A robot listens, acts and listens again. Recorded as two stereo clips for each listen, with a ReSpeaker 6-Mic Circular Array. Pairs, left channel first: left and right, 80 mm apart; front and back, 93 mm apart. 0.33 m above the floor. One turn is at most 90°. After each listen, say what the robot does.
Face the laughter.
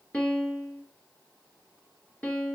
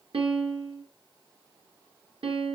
Keep listening.
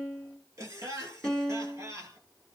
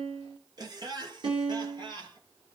Turn 90° right.
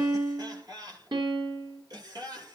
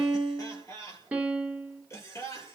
Turn 55° right.
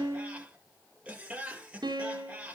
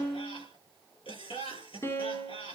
Turn 15° right.
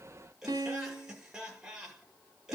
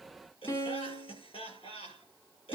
Facing the laughter, over 4 m away.